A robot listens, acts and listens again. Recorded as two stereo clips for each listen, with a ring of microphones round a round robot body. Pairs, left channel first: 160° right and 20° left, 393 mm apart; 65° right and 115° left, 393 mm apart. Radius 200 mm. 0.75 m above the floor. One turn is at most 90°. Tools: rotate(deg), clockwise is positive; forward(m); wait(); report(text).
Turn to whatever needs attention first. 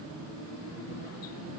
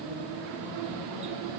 wait()
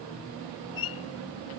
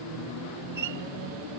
wait()
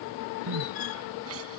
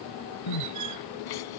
rotate(35)
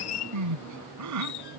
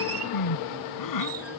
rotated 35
rotate(25)
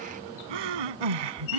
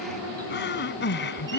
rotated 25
report("Found it: crying, straight ahead.")